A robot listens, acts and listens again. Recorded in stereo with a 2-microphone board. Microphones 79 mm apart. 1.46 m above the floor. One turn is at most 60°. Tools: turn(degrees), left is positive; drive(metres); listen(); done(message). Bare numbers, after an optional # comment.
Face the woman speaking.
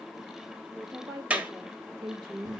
# The woman speaking: about 65° right or 115° right.
turn(-60)
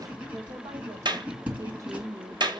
# So it is at 40° right.
turn(-40)
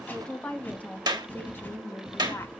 # The woman speaking is now 30° left.
turn(30)
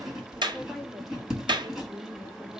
done("Found it: a woman speaking, straight ahead.")